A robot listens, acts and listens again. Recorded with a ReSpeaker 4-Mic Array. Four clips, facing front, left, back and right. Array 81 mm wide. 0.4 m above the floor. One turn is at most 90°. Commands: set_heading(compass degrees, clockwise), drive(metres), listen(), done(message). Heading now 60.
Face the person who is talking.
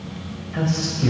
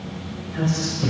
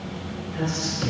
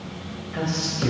set_heading(100)
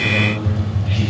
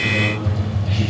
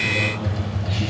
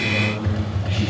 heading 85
set_heading(95)
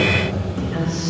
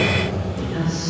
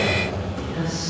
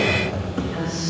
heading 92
done("Facing the man speaking.")